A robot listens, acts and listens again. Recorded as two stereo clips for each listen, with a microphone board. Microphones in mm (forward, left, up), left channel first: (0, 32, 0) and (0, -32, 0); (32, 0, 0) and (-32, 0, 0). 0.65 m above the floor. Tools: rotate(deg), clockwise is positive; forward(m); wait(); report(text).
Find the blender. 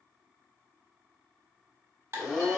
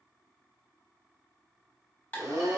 rotate(-175)
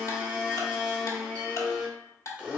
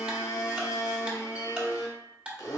rotate(20)
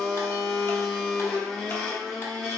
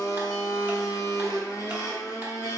report("Found it: a blender, straight ahead.")